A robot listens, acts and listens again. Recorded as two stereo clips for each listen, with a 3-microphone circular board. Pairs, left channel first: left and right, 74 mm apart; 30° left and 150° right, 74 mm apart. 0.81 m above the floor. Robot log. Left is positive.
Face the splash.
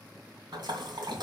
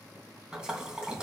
note: The splash: 70° right.
cmd yaw -70
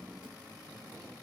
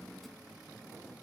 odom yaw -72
end: I heard a splash from this way, but can't make it out now.